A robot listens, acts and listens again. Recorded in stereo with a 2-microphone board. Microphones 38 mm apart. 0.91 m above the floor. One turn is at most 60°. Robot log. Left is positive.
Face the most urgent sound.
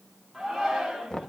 cmd yaw -30
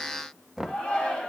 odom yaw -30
note: So it is at 25° left.
cmd yaw +25
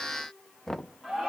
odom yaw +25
end: Found it: a shout, straight ahead.